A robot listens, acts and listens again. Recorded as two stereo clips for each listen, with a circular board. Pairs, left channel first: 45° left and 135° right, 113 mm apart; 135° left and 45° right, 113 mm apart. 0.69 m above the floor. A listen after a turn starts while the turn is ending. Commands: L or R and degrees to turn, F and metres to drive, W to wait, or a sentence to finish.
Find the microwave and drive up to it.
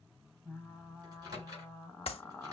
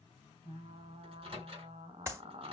R85
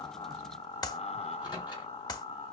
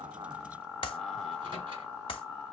W
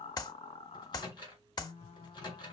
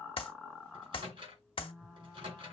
F1.0
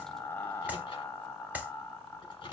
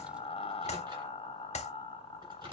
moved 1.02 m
F1.0
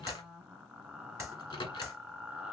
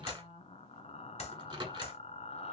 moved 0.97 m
F1.0
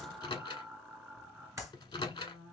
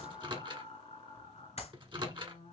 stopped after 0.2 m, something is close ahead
Arrived at the microwave, straight ahead.